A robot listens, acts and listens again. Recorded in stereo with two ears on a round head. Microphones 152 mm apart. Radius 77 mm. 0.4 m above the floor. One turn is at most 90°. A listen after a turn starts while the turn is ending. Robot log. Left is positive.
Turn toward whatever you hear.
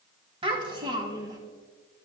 note: The child speaking: about 25° right or 155° right.
cmd yaw -25
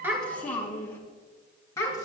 note: So it is at 20° left.
cmd yaw +20
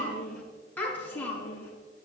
note: The child speaking is now 15° left.
cmd yaw +15
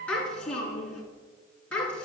end: Facing the child speaking.